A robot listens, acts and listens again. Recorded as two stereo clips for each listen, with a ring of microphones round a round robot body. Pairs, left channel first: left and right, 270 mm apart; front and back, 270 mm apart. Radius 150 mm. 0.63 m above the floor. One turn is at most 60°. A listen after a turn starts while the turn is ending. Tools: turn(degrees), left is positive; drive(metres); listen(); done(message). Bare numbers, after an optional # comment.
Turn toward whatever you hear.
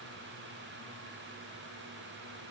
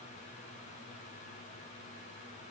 listen()
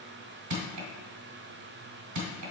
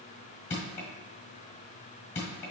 # The crushing: 70° right.
turn(-60)
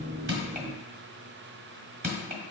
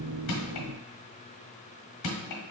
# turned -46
# The crushing is now 25° right.
turn(-25)
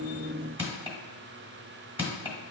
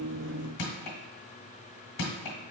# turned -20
done("Found it: crushing, straight ahead, 1 to 2 m away.")